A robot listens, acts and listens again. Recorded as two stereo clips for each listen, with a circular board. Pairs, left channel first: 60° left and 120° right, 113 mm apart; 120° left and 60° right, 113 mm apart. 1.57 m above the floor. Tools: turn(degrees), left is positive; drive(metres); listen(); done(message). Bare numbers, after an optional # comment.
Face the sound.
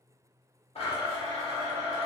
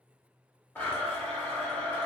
# The blender: 50° left.
turn(50)
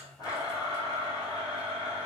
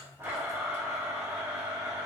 # The blender is now 10° left.
turn(10)
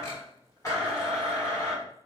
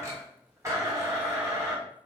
done("Facing the blender.")